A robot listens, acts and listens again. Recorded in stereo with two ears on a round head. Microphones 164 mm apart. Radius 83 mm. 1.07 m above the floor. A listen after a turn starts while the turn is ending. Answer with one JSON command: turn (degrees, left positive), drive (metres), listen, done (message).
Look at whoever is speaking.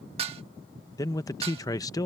{"turn": 20}
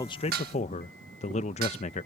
{"turn": 140}
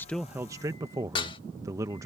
{"turn": -15}
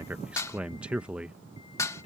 {"done": "Found it: a man speaking, straight ahead."}